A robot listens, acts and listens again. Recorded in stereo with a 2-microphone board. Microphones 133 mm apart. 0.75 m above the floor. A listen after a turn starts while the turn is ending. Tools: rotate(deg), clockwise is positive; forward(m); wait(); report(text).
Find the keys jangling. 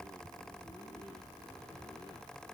wait()
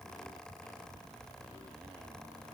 wait()
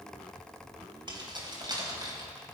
rotate(30)
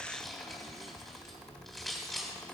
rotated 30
report("Found it: keys jangling, straight ahead.")